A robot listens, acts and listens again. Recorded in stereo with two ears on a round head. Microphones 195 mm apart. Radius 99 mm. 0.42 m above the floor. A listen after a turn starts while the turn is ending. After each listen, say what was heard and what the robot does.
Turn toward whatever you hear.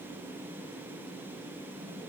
Keep listening.
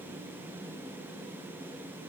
Keep listening.
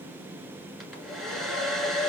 Turn 30° left.
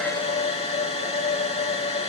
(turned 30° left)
So it is at 150° left. Turn 150° left.
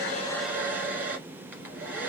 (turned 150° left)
The hair dryer is now 10° right. Turn 10° right.
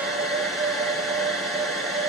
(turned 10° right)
Found it: a hair dryer, straight ahead, 1 to 2 m away.